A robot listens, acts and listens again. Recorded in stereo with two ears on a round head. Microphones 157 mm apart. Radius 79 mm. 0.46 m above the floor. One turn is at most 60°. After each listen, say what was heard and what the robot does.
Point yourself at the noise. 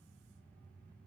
Keep listening.
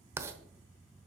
Turn 30° right.
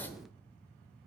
So it is at 15° left. Turn 15° left.
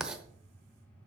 Facing the writing.